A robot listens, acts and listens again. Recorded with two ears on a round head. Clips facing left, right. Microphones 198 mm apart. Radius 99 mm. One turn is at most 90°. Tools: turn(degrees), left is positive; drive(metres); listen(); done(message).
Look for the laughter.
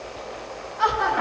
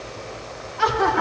turn(degrees=-55)
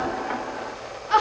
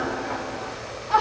turn(degrees=20)
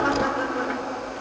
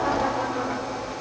turn(degrees=30)
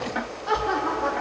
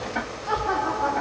turn(degrees=30)
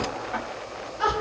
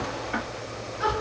turn(degrees=10)
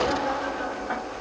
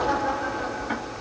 done("Found it: laughter, straight ahead.")